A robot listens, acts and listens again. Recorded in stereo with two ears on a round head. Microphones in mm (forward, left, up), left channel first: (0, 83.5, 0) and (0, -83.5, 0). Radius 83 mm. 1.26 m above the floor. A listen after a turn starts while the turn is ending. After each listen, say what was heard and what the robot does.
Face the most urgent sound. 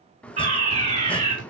The fire alarm: about 35° right or 145° right. Turn 35° right.
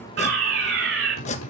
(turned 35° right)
So it is at 110° right. Turn 110° right.
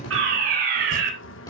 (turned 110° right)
The fire alarm is now 50° right. Turn 50° right.
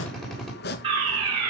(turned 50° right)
The fire alarm is now 30° right. Turn 30° right.
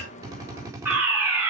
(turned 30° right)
The fire alarm is now 10° right. Turn 10° right.
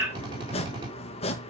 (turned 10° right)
Keep listening.
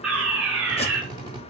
Found it: a fire alarm, straight ahead, over 4 m away.